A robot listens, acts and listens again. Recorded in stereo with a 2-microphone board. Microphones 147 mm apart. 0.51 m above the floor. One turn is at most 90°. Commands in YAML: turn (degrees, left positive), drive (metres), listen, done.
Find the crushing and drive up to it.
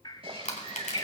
turn: 60
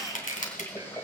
turn: 60
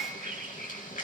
listen: true
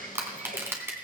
turn: -15
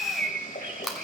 drive: 1.0
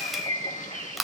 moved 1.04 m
drive: 1.0
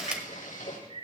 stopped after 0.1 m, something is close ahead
listen: true
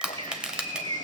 done: "Arrived at the crushing, straight ahead."